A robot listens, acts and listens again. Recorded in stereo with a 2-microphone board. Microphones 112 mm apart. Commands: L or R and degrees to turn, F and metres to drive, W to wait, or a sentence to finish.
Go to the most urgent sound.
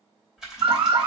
R90
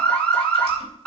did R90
L10
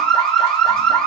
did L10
F1.0
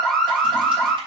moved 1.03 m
F1.0
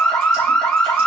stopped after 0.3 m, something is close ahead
Arrived at the alarm, straight ahead.